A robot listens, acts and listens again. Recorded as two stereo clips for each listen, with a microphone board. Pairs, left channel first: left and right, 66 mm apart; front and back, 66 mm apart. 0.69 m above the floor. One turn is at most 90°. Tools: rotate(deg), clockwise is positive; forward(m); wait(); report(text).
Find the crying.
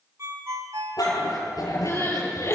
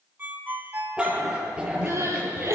rotate(-90)
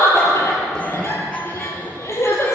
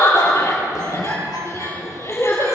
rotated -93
rotate(-45)
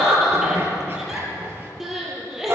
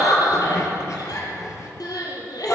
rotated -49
report("Facing the crying, over 4 m away.")